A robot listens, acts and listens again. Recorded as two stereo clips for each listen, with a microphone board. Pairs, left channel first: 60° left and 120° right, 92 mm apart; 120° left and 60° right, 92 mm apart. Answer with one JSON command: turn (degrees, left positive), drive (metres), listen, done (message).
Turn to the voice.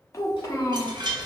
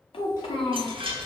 {"turn": 115}
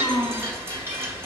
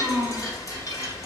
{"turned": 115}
{"turn": 10}
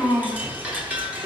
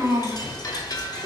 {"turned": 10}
{"done": "Found it: a child speaking, straight ahead, 1 to 2 m away."}